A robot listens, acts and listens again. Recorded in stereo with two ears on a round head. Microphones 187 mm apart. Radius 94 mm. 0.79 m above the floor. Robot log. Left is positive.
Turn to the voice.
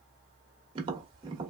cmd idle
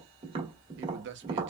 note: The man speaking: about 55° right or 125° right.
cmd yaw -55
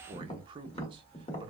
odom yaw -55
note: So it is at 30° right.
cmd yaw -30
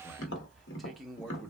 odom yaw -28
end: Facing the man speaking.